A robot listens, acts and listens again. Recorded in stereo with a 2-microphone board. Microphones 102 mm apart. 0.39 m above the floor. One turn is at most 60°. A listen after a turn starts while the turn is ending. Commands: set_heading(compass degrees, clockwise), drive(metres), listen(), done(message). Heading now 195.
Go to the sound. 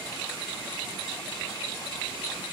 listen()
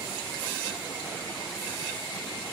listen()
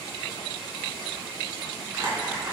set_heading(225)
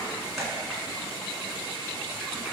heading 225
listen()
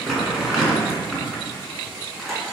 drive(1.0)
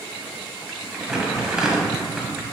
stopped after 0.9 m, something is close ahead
done("I am next to the crumpling.")